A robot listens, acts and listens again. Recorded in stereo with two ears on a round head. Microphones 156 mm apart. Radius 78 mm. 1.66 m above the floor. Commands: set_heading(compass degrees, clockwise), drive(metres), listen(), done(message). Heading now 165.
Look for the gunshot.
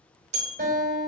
listen()
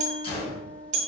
set_heading(130)
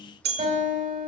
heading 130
listen()
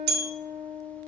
done("I heard a gunshot, but can't make it out now. It was about straight ahead or 110° left.")